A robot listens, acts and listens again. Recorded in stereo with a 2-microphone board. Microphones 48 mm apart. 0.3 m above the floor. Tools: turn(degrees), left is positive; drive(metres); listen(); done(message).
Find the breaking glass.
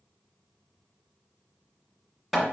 listen()
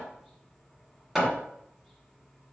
listen()
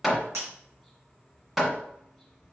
turn(degrees=-70)
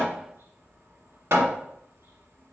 listen()
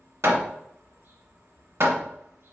done("I heard breaking glass, but can't make it out now. It was about straight ahead or 40° right.")